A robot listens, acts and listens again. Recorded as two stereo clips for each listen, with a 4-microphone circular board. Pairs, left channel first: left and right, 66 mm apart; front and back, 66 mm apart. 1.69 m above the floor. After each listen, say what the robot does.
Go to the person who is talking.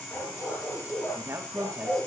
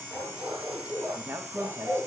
Turn 130° right.
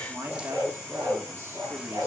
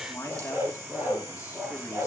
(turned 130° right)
Turn 40° right.
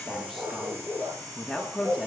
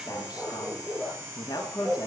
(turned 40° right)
Drive 1.0 m forward.
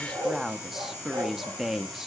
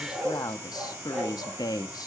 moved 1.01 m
Drive 1.0 m forward.
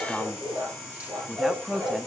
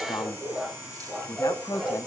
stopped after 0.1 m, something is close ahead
Turn 10° right.
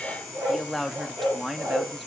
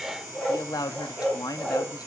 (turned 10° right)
I am next to the man speaking.